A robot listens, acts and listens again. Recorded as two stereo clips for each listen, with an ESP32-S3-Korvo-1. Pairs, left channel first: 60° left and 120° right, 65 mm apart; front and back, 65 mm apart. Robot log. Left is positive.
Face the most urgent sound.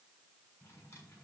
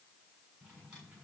cmd idle
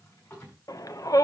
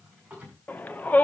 note: The shout: 60° left.
cmd yaw +60
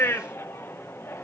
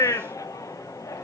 note: The shout is now 15° left.
cmd yaw +15
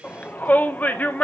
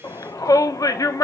end: Facing the shout, 1 to 2 m away.